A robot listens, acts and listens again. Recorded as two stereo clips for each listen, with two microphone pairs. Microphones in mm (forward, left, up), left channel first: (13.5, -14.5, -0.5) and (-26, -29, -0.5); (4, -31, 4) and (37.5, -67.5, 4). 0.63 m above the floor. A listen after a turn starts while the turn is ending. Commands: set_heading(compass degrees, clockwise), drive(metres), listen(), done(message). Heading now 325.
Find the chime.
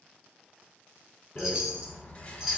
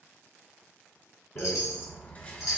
set_heading(195)
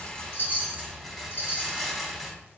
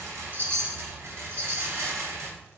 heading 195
set_heading(205)
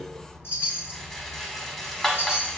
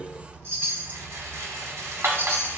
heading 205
done("Facing the chime, under 1 m away.")